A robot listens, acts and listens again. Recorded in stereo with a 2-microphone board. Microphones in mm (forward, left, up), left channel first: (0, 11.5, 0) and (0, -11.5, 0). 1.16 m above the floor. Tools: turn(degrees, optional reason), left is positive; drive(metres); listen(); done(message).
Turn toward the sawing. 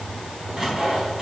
turn(degrees=-15, reason="The sawing: about 15° right or 165° right.")
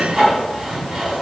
turn(degrees=-145, reason="So it is at 145° right.")
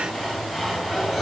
done("Found it: sawing, straight ahead, over 4 m away.")